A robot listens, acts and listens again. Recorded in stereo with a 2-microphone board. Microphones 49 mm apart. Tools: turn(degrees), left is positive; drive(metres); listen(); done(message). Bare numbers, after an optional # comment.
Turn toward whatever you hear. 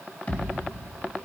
# The thud: about 35° left or 145° left.
turn(35)
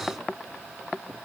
listen()
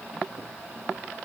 done("I heard a thud, but can't make it out now. It was about straight ahead or 110° left.")